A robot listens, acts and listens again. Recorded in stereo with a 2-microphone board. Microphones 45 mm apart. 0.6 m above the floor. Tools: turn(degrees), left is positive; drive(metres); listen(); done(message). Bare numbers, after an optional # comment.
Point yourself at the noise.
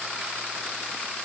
listen()
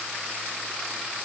listen()
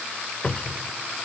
# The cupboard door: about 30° left or 150° left.
turn(30)
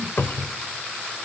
# So it is at 120° left.
turn(120)
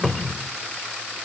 done("Facing the cupboard door, under 1 m away.")